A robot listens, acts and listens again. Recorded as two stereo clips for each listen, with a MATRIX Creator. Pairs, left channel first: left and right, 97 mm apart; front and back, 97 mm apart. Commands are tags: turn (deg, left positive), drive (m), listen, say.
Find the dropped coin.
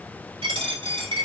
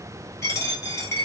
<turn deg="-60"/>
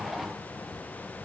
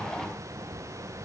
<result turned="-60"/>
<say>Facing where the dropped coin came from. I can't hear it now.</say>